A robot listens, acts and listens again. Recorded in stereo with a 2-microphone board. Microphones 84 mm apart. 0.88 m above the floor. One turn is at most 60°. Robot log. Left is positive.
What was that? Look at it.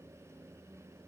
cmd idle
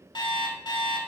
note: The alarm clock: about 60° left or 120° left.
cmd yaw +60
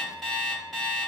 end: Found it: an alarm clock, straight ahead, 1 to 2 m away.